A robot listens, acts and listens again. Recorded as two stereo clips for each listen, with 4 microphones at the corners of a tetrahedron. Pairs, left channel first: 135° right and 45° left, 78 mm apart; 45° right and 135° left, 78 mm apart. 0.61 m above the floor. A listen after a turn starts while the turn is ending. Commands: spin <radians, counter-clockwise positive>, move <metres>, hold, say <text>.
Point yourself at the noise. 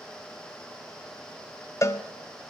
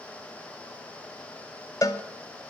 spin -1.48
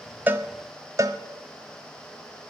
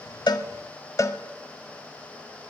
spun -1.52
say Found it: a cowbell, straight ahead, under 1 m away.